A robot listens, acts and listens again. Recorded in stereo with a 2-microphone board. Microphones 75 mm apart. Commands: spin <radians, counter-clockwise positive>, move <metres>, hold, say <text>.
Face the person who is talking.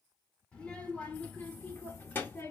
spin 0.52
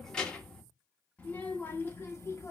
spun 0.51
spin 0.70
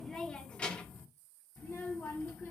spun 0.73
spin 0.52
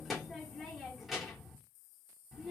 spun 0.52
say Found it: a child speaking, straight ahead.